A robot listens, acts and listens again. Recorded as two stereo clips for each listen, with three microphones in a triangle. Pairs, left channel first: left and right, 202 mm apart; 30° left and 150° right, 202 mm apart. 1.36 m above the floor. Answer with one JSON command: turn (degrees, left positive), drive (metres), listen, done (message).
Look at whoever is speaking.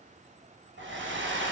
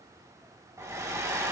{"listen": true}
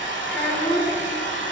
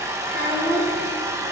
{"turn": 10}
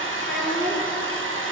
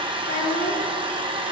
{"done": "Facing the child speaking."}